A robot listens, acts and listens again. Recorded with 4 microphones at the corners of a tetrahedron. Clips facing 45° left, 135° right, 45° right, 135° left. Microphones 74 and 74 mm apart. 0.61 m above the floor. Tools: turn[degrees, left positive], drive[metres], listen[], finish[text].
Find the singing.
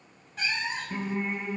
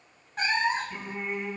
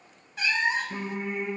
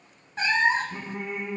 Thought: The singing: 10° right.
Action: turn[-10]
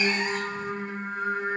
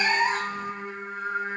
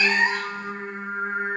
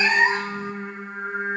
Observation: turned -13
Action: finish[Facing the singing, over 4 m away.]